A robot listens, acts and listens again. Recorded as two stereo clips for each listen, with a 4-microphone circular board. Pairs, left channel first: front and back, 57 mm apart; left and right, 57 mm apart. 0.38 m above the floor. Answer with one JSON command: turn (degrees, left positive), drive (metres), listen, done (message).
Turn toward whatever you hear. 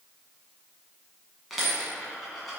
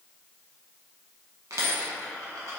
{"turn": -90}
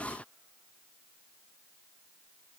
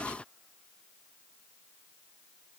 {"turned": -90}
{"done": "Facing where the dropped coin came from. I can't hear it now."}